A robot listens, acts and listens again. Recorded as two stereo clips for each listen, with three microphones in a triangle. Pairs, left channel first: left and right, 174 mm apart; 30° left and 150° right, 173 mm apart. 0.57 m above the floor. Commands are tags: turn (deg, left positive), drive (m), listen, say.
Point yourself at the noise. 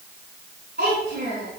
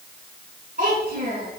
<turn deg="-115"/>
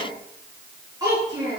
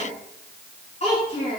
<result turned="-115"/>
<turn deg="-20"/>
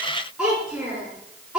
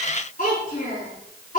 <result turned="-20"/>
<say>Found it: a child speaking, straight ahead, over 4 m away.</say>